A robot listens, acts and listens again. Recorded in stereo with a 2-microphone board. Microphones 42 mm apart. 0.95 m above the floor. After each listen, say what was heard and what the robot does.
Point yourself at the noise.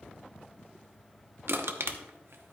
Turn 90° right.
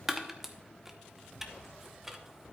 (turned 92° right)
So it is at 10° right. Turn 10° right.
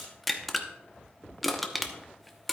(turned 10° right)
Found it: crushing, straight ahead, under 1 m away.